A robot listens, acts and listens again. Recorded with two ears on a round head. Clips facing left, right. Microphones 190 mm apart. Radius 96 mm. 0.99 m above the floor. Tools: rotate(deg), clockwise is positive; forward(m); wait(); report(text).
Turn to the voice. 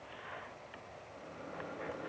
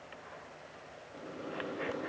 wait()
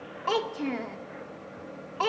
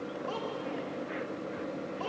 rotate(-90)
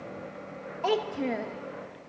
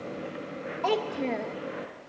report("Found it: a child speaking, straight ahead, under 1 m away.")